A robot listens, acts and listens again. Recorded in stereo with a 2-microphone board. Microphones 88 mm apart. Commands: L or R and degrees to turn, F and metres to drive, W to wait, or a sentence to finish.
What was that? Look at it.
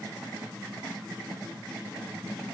W
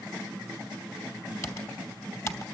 L35
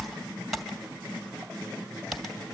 Facing the typing on a keyboard, 2 to 4 m away.